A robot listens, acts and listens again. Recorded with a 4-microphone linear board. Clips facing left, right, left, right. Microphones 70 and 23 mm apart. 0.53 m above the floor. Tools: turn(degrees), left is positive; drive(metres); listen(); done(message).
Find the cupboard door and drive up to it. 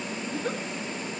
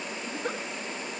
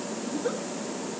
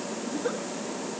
listen()
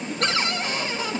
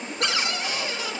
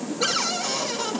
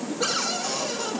turn(degrees=35)
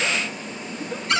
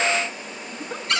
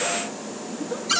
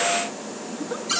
drive(metres=1.0)
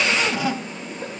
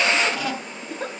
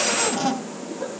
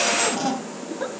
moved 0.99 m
drive(metres=1.0)
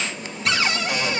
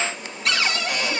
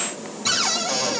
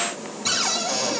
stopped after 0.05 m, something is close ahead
done("Blocked. The cupboard door is further on, straight ahead.")